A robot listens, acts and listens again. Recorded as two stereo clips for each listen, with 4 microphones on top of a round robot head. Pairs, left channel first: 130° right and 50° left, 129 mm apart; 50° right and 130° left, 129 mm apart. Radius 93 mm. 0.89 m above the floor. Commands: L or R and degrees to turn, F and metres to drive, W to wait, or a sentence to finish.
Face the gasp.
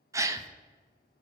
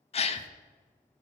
R15
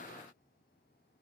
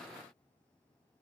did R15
I heard a gasp from this way, but can't make it out now.